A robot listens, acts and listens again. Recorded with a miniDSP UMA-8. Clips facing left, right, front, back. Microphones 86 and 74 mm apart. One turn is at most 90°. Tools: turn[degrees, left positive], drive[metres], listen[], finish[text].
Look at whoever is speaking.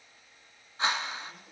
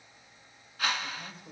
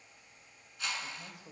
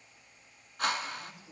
Thought: The man speaking: 25° right.
Action: turn[-25]
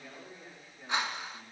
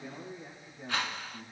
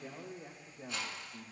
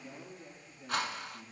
Thought: The man speaking is now 10° right.
Action: turn[-10]
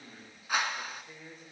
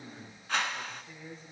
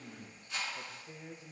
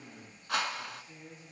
Thought: The man speaking is now 15° left.
Action: turn[15]
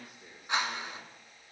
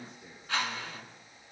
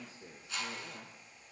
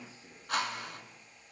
Thought: The man speaking is now 15° left.
Action: turn[15]
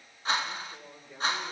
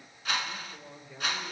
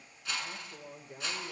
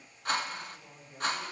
Thought: The man speaking is now 10° left.
Action: turn[10]
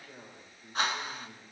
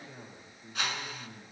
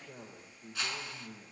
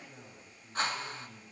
Action: finish[Facing the man speaking, 2 to 4 m away.]